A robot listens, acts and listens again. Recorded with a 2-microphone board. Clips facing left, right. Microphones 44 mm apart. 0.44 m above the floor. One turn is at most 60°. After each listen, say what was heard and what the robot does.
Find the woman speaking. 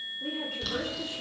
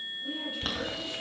Turn 60° left.
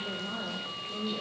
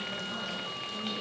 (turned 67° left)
So it is at 25° left. Turn 25° left.
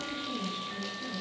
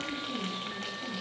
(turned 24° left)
Facing the woman speaking, over 4 m away.